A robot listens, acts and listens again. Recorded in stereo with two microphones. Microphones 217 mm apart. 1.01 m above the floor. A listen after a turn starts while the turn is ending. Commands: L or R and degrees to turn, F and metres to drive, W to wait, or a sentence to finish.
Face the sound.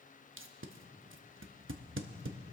R70
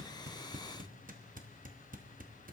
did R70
R40
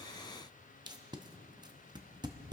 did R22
R20
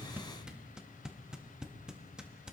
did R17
Facing the tape being pulled.